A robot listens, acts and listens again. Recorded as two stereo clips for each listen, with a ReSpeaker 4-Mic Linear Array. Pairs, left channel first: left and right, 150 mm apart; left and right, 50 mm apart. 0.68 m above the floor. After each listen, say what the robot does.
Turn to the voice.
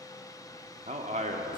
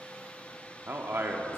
Turn 50° right.
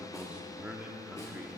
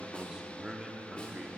Turn 10° right.
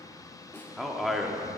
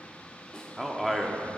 Facing the man speaking, 1 to 2 m away.